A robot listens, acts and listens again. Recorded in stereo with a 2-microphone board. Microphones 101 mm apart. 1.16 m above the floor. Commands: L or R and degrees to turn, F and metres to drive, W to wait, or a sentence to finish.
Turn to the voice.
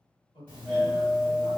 L60
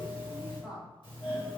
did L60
W
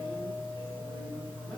W
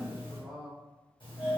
Facing the man speaking.